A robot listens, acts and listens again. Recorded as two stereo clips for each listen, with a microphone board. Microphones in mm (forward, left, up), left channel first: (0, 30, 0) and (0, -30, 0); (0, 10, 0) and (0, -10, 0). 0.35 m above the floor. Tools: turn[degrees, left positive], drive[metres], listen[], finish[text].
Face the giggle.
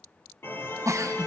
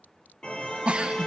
Thought: The giggle: about 60° right or 120° right.
Action: turn[-60]
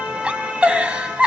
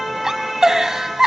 Thought: So it is at 20° right.
Action: turn[-20]
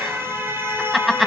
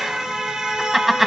Action: finish[Found it: a giggle, straight ahead.]